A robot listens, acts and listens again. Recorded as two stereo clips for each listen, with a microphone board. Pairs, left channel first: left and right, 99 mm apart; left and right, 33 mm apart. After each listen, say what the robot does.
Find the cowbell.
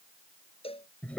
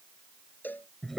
Turn 70° left.
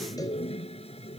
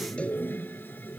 Keep listening.
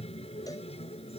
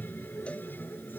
Keep listening.
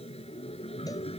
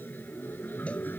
I heard a cowbell, but can't make it out now. It was about straight ahead or 40° left.